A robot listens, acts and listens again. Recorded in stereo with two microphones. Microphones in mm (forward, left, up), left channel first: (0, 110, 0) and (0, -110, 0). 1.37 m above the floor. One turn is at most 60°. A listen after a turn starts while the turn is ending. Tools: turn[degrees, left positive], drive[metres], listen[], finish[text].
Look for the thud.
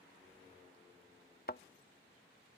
Thought: The thud: about 45° left or 135° left.
Action: turn[45]
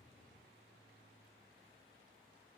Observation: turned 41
Action: listen[]
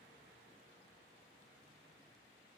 Action: finish[I heard a thud, but can't make it out now. It was about 5° left or 95° left.]